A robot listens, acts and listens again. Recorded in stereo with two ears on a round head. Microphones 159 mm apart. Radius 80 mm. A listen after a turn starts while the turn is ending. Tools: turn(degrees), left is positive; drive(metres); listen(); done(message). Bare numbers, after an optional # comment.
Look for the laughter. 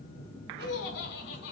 turn(90)
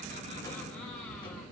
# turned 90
listen()
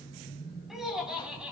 # The laughter is now 10° right.
turn(-10)
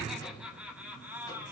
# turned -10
# The laughter is now 15° right.
turn(-15)
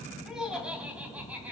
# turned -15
# The laughter is now 10° right.
turn(-10)
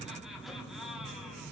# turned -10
done("Found it: laughter, straight ahead.")